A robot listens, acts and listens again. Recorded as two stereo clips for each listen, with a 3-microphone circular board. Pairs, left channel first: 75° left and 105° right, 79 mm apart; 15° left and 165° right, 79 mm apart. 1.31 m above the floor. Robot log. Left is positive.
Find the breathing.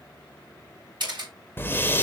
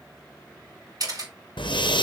note: The breathing: 10° left.
cmd yaw +10
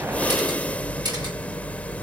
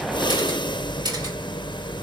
end: Found it: breathing, straight ahead, under 1 m away.